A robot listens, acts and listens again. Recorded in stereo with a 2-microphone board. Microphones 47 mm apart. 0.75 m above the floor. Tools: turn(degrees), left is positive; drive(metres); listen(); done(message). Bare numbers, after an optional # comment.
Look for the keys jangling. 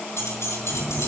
# The keys jangling: about 75° left or 105° left.
turn(75)
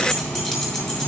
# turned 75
done("Found it: keys jangling, straight ahead.")